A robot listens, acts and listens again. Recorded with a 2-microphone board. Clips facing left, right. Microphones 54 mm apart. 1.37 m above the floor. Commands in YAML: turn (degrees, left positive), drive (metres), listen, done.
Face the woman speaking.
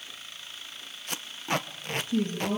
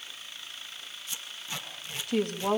turn: -90
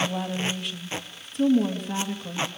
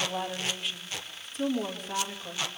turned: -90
done: "Facing the woman speaking, 2 to 4 m away."